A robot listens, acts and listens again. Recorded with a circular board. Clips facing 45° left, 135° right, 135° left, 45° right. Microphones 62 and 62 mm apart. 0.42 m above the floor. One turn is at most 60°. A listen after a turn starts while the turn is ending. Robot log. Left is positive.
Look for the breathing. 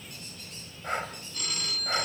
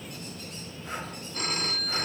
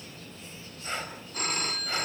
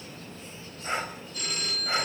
note: The breathing: 25° left.
cmd yaw +25
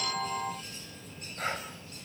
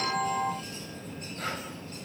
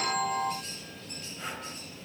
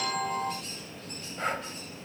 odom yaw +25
note: The breathing is now 15° right.
cmd yaw -15
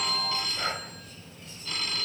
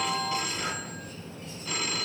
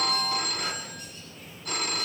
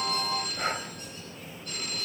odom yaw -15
cmd idle
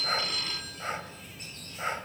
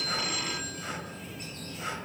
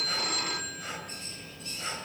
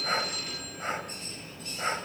end: Facing the breathing, 2 to 4 m away.